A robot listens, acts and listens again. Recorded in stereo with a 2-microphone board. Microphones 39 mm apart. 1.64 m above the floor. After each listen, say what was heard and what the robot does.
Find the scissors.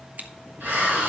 The scissors: about 45° right or 135° right. Turn 45° right.
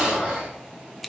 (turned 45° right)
Facing the scissors.